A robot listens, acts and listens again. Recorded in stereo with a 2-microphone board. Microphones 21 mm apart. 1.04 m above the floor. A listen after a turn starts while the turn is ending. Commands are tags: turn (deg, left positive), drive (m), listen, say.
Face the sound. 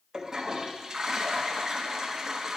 <turn deg="-30"/>
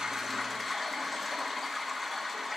<say>Facing the toilet flushing.</say>